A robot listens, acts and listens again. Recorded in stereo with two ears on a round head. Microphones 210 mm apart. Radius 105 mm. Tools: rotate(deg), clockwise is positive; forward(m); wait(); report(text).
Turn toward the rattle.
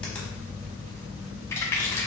rotate(-30)
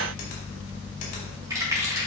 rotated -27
rotate(15)
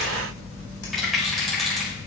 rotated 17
report("Found it: a rattle, straight ahead, 2 to 4 m away.")